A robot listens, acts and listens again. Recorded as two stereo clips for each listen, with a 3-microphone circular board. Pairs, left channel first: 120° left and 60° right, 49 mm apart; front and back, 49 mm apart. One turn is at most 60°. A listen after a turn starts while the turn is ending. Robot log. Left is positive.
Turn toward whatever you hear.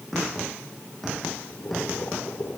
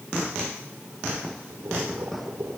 note: The boiling: 155° left.
cmd yaw +60
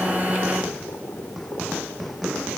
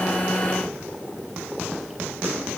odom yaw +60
note: The boiling is now 95° left.
cmd yaw +60
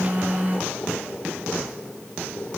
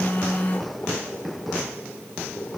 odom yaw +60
note: The boiling is now 50° left.
cmd yaw +50
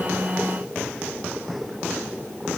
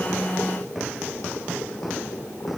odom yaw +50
note: The boiling is now 10° left.
cmd yaw +10
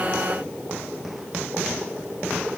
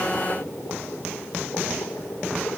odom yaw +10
end: Facing the boiling, over 4 m away.